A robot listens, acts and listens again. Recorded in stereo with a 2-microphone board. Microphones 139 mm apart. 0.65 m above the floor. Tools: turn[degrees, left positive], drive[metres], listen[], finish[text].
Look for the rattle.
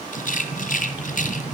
Thought: The rattle: about 70° left or 110° left.
Action: turn[70]
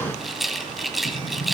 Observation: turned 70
Action: finish[Facing the rattle, 2 to 4 m away.]